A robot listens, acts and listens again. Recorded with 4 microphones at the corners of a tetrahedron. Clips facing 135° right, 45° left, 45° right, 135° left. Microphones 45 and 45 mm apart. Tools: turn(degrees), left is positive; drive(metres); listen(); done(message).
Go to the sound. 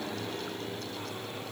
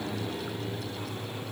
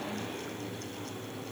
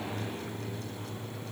listen()
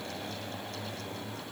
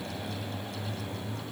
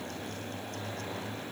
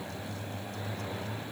listen()
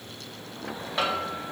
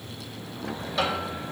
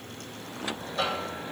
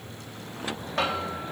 turn(degrees=160)
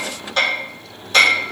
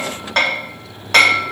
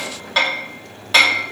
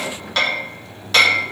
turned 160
turn(degrees=35)
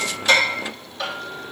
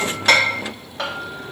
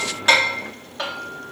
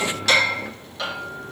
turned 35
turn(degrees=15)
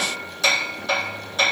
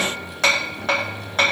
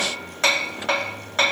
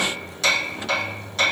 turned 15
turn(degrees=10)
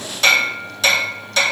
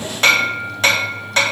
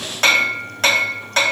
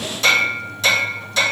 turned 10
drive(metres=1.0)
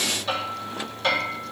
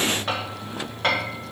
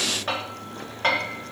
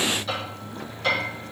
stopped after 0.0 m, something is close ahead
done("Blocked. The hammering is further on, straight ahead.")